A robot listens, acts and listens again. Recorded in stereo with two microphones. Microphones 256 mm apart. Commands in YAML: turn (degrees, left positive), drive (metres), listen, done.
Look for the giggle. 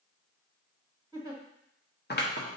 turn: -30
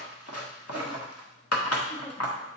listen: true
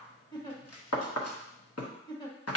turn: 15
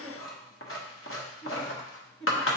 done: "Facing the giggle."